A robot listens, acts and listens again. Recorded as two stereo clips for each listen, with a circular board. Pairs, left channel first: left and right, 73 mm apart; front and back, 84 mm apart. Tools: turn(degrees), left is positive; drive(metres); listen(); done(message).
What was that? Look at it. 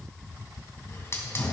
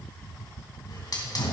turn(degrees=35)
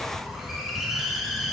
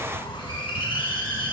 done("Facing the hiss, 2 to 4 m away.")